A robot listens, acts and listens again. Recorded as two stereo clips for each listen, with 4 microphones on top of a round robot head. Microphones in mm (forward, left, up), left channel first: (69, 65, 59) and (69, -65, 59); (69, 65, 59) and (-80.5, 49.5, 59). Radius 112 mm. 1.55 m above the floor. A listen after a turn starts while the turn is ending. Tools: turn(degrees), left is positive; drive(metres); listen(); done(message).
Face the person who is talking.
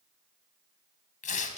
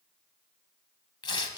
listen()
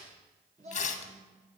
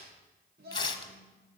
turn(degrees=-140)
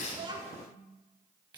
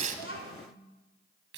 listen()
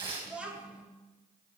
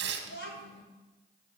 turn(degrees=-10)
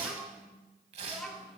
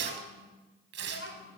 done("Facing the child speaking.")